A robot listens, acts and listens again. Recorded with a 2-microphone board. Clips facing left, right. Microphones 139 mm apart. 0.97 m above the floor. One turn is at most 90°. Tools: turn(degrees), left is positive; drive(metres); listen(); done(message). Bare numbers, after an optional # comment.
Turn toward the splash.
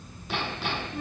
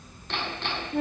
listen()
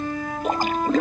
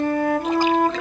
# The splash: about 50° left or 130° left.
turn(50)
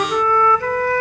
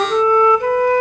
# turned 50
listen()
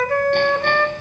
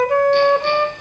done("I heard a splash, but can't make it out now. It was about straight ahead or 80° left.")